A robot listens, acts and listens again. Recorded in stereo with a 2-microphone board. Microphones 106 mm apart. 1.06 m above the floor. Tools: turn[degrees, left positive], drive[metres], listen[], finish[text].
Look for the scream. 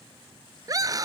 Thought: The scream: about 35° right or 145° right.
Action: turn[-35]
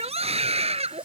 Thought: So it is at 110° right.
Action: turn[-110]
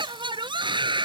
Thought: The scream is now 45° right.
Action: turn[-45]
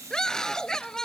Action: finish[Found it: a scream, straight ahead.]